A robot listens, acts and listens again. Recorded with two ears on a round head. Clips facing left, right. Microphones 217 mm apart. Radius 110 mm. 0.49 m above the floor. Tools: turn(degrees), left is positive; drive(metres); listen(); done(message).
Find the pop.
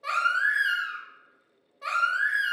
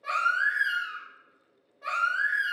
listen()
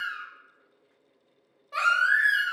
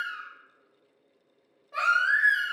listen()
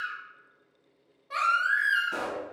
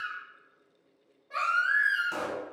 turn(degrees=-65)
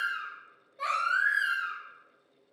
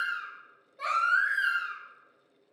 listen()
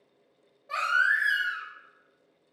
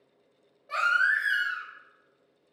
done("I heard a pop, but can't make it out now. It was about straight ahead or 50° right.")